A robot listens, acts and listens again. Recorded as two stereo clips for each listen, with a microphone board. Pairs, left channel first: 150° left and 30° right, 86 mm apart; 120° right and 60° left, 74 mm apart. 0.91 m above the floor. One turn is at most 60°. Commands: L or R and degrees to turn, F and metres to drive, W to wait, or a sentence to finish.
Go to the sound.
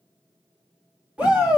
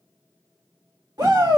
L45
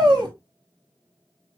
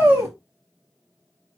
F1.0
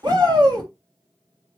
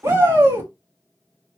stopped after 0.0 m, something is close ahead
Blocked. The shout is further on, straight ahead.